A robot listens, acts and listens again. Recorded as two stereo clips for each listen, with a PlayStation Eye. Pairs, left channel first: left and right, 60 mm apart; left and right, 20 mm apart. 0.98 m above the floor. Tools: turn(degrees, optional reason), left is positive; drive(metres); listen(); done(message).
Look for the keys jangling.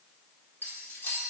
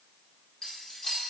turn(degrees=40, reason="The keys jangling: about 40° left or 140° left.")
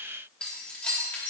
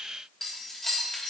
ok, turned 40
turn(degrees=30, reason="So it is at 30° left.")
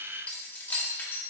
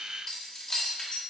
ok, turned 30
turn(degrees=35, reason="The keys jangling is now 35° left.")
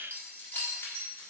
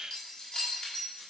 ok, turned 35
turn(degrees=40, reason="The keys jangling is now 40° left.")
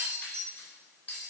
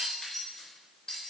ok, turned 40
turn(degrees=20, reason="The keys jangling is now 20° left.")
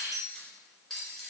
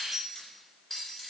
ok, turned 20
done("Found it: keys jangling, straight ahead.")